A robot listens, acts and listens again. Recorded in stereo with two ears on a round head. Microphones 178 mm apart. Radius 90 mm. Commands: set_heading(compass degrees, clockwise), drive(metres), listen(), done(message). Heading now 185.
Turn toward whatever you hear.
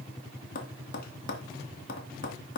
set_heading(135)
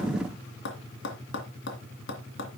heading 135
set_heading(60)
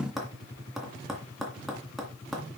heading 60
done("Facing the tapping, 2 to 4 m away.")